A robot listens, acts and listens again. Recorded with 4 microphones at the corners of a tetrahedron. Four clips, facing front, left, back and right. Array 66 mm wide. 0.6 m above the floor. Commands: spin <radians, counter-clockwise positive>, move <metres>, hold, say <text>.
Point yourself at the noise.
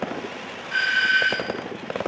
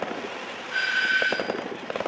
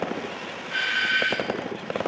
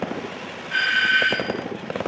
spin -1.40
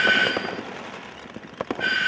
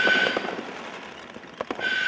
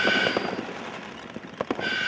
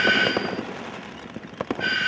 spin -0.61
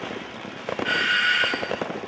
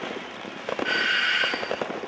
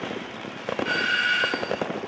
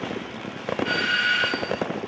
spin 0.44
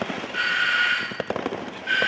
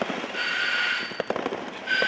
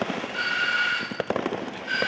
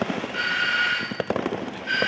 spin -0.26
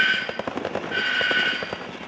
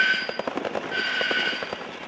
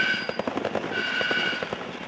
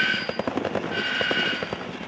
say Facing the doorbell, 2 to 4 m away.